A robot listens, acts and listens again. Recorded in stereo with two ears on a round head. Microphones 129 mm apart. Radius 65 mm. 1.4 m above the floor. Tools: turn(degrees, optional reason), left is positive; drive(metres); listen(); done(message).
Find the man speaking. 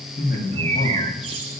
turn(degrees=70, reason="The man speaking: about 70° left or 110° left.")
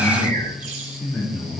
turn(degrees=10, reason="So it is at 10° left.")
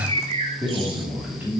turn(degrees=-15, reason="The man speaking is now 15° right.")
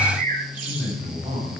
turn(degrees=-10, reason="The man speaking is now 10° right.")
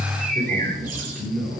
done("Found it: a man speaking, straight ahead, 2 to 4 m away.")